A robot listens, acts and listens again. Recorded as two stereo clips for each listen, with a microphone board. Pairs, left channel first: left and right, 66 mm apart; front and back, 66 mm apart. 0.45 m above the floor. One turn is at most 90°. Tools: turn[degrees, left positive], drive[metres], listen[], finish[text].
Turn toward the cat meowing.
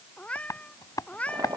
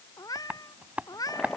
Thought: The cat meowing: 20° left.
Action: turn[20]
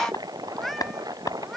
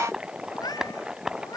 Action: finish[Found it: a cat meowing, straight ahead.]